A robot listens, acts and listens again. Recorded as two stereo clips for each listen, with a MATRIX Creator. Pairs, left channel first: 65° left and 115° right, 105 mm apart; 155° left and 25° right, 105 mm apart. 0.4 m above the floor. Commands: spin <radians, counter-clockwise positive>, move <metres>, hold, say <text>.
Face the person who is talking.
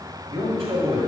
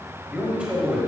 spin -1.75
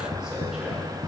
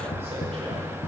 hold
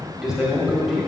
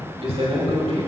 spin -0.52
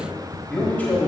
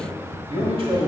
say Found it: a man speaking, straight ahead, 1 to 2 m away.